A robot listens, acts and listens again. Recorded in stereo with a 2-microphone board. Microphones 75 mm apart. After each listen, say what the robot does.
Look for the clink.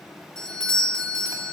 Keep listening.
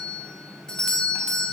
Keep listening.
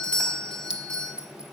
Turn 30° right.
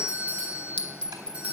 Turn 20° left.
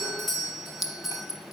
Facing the clink.